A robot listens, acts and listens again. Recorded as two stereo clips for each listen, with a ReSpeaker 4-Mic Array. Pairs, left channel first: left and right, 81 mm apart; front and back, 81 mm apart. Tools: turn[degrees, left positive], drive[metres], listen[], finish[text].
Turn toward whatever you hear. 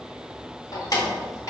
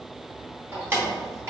Thought: The keys jangling: 130° left.
Action: turn[130]
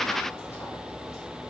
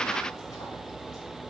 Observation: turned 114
Thought: Nothing new. It was at 15° left.
Action: turn[15]
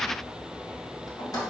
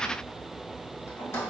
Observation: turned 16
Thought: The keys jangling is now 60° left.
Action: turn[60]
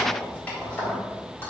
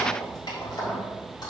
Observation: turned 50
Thought: The keys jangling is now 25° left.
Action: turn[25]
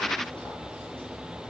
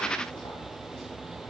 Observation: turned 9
Thought: Nothing new. It was at 15° left.
Action: turn[15]
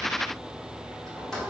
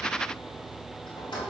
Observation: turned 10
Action: finish[Found it: keys jangling, straight ahead, 1 to 2 m away.]